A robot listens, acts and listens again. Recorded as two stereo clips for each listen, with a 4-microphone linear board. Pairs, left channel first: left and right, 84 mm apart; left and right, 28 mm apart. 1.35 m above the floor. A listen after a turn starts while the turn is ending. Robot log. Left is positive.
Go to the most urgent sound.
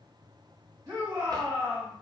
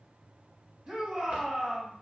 note: The shout: about 45° right or 135° right.
cmd yaw -45
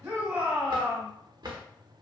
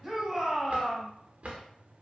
cmd fwd 1.0
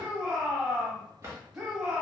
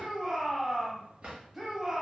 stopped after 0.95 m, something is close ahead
end: Arrived at the shout, straight ahead.